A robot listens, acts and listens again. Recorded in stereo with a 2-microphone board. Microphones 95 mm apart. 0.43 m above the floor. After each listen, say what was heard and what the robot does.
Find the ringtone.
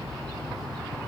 Keep listening.
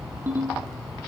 The ringtone: about 20° right or 160° right. Turn 20° right.
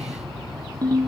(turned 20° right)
So it is at 135° right. Turn 135° right.
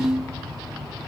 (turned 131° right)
Facing the ringtone.